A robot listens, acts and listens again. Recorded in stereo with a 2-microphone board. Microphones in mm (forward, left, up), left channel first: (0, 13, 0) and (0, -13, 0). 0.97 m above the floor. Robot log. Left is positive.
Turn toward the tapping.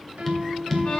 cmd yaw +30
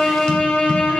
cmd idle
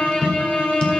note: So it is at 140° left.
cmd yaw +140
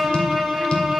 cmd idle
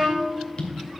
note: The tapping is now 45° left.
cmd yaw +45
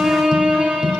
note: The tapping is now 15° right.
cmd yaw -15
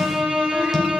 cmd idle
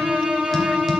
cmd idle
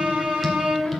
end: I heard tapping from this way, but can't make it out now.